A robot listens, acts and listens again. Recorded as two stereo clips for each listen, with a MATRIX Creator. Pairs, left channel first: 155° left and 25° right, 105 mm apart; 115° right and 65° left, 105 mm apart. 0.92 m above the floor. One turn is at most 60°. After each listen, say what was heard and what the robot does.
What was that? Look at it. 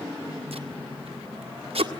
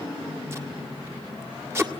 Found it: tape being pulled, straight ahead.